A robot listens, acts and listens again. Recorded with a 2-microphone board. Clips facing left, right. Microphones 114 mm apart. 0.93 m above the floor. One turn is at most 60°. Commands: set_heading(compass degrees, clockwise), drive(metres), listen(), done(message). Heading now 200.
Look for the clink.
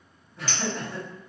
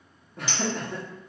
set_heading(215)
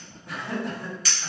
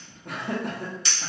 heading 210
set_heading(270)
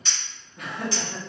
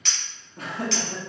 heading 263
set_heading(323)
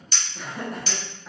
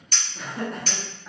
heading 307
set_heading(357)
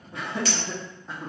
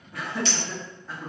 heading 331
set_heading(1)
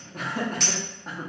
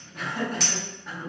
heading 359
done("Found it: a clink, straight ahead.")